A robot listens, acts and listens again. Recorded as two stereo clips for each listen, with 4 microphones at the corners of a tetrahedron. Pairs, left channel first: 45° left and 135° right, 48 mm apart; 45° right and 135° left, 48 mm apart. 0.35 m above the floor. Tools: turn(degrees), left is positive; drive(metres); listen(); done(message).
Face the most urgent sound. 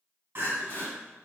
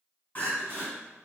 turn(degrees=-95)
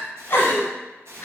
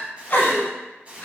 done("Found it: crying, straight ahead.")